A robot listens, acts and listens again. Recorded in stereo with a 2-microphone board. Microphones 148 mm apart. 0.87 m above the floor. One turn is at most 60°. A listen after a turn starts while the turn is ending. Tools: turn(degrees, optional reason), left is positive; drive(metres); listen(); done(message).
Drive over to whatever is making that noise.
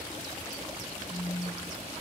turn(degrees=35, reason="The phone buzzing: about 35° left or 145° left.")
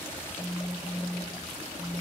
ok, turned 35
drive(metres=1.0)
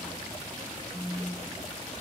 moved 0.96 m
drive(metres=1.0)
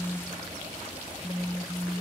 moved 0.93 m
drive(metres=1.0)
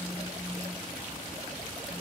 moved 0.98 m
listen()
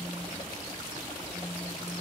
listen()
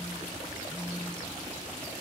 done("Facing where the phone buzzing came from. I can't hear it now. I did not reach it.")